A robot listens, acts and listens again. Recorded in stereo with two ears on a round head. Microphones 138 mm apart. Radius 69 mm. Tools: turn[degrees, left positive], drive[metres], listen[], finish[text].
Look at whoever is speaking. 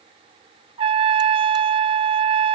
Action: listen[]
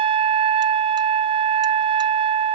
Action: listen[]
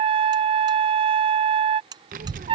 Thought: The child speaking: about 60° right or 120° right.
Action: turn[-60]
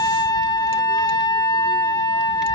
Action: listen[]
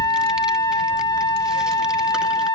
Action: finish[Facing the child speaking.]